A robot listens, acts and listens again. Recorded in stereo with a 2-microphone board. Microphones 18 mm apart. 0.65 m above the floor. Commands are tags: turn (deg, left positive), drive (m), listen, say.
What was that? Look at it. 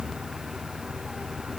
<listen/>
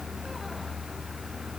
<listen/>
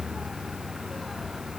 <say>I can't make out anything.</say>